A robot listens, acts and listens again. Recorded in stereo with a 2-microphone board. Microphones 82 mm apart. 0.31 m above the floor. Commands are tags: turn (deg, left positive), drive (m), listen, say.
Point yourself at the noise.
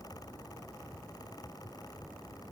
<listen/>
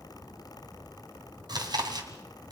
<turn deg="-55"/>
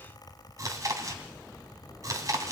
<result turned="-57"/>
<turn deg="-50"/>
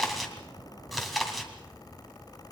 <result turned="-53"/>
<say>Found it: chewing, straight ahead, 2 to 4 m away.</say>